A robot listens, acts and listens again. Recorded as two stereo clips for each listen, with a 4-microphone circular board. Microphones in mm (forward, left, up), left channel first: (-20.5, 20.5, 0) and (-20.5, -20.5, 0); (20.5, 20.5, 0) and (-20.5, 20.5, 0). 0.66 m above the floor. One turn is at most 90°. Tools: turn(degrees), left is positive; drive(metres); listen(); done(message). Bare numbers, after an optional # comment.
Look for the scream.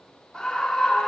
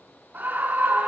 # The scream: 155° left.
turn(90)
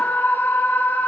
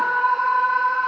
# The scream is now 95° left.
turn(90)
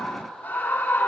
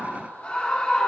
# The scream is now 55° left.
turn(55)
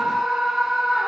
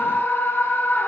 # The scream is now 15° right.
turn(-15)
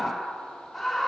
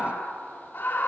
done("Found it: a scream, straight ahead, 1 to 2 m away.")